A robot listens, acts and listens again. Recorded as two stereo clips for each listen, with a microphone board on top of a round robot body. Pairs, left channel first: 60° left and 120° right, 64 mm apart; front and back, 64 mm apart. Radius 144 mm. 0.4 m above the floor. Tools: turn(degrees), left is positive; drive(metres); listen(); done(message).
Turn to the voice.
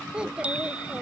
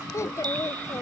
turn(degrees=-45)
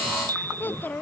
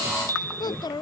done("Facing the child speaking.")